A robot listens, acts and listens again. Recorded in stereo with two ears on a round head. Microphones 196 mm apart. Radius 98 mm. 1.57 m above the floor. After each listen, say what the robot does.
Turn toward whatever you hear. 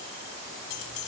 Turn 70° left.
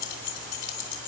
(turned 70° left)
Turn 55° left.
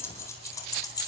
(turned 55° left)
Turn 20° left.
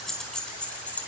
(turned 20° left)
Facing the keys jangling.